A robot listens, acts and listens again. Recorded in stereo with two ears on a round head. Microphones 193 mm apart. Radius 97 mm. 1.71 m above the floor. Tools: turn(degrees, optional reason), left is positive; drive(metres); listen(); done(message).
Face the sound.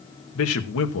turn(degrees=70, reason="The man speaking: about 70° left or 110° left.")
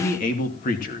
turn(degrees=40, reason="So it is at 40° left.")
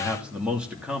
done("Found it: a man speaking, straight ahead, 2 to 4 m away.")